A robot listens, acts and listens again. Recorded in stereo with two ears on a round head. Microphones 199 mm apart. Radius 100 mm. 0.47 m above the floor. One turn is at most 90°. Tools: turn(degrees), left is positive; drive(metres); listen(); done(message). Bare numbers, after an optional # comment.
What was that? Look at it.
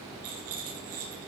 # The rattle: about 75° right or 105° right.
turn(-75)
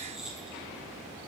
done("Facing the rattle, over 4 m away.")